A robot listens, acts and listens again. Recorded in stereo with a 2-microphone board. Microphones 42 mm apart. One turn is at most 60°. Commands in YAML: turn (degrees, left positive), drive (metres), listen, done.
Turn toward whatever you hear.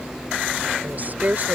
turn: -45
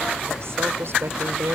turn: -60
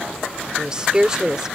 turn: -15
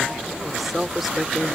done: "Facing the woman speaking."